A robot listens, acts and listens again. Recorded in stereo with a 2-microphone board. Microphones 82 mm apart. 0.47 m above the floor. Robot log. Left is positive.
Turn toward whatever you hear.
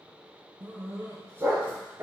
note: The dog barking: about 30° right or 150° right.
cmd yaw -30
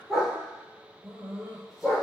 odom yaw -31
end: Facing the dog barking.